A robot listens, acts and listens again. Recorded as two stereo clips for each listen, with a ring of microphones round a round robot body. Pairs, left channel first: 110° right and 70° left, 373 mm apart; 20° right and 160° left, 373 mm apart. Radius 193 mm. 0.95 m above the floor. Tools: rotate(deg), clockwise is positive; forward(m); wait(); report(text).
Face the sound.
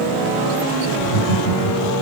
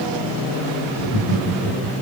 rotate(125)
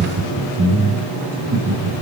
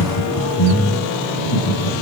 rotate(-10)
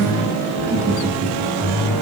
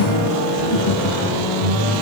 report("Found it: laughter, straight ahead.")